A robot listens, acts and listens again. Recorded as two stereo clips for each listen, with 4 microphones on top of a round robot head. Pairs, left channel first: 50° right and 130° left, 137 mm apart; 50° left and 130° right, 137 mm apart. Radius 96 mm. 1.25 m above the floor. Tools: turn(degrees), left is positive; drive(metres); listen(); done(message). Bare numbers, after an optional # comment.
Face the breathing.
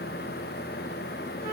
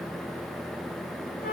listen()
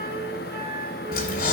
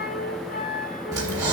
# The breathing: 65° right.
turn(-65)
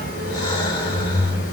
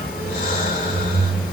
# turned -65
# The breathing is now 10° left.
turn(10)
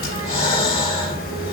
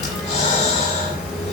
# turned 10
done("Facing the breathing.")